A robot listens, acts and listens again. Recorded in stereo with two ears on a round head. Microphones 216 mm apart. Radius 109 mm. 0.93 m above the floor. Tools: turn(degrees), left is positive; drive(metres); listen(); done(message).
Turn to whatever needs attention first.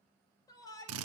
turn(degrees=15)
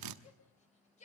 turn(degrees=150)
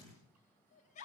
turn(degrees=30)
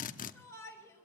turn(degrees=10)
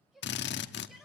done("Facing the shout, over 4 m away.")